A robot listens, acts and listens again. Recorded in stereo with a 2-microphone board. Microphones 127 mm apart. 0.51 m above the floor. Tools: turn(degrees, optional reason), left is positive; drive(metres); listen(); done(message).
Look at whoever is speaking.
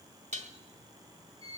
listen()
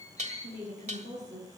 turn(degrees=-65, reason="The woman speaking: about 65° right or 115° right.")
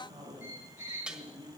turn(degrees=-40, reason="So it is at 40° right.")
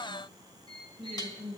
done("Facing the woman speaking.")